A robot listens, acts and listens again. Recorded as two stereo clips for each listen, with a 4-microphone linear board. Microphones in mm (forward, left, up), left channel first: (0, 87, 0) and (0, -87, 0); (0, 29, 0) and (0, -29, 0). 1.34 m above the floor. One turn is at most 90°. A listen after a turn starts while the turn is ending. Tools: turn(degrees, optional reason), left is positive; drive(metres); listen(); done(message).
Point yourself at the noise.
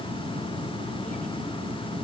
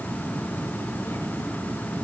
listen()
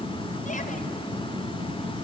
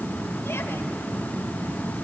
listen()
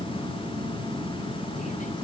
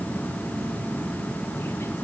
done("I can't make out anything.")